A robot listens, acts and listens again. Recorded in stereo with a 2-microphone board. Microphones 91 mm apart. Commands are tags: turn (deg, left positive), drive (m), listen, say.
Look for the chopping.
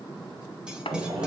<turn deg="90"/>
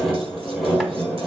<listen/>
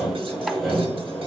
<listen/>
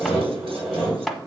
<say>Found it: chopping, straight ahead, 1 to 2 m away.</say>